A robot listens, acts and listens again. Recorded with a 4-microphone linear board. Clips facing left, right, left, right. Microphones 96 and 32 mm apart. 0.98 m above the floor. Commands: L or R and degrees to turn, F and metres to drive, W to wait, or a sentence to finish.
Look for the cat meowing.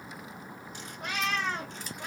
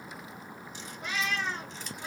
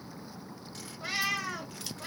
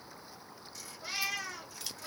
L70
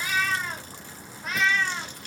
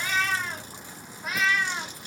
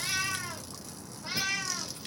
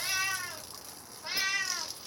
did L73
R10
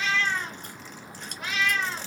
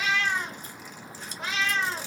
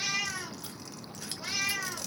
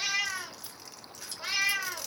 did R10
R35
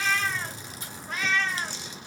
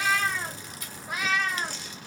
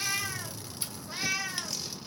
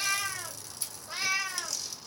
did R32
R10
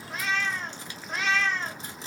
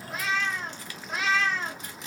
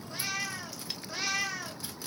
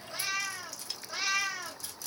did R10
Facing the cat meowing, 1 to 2 m away.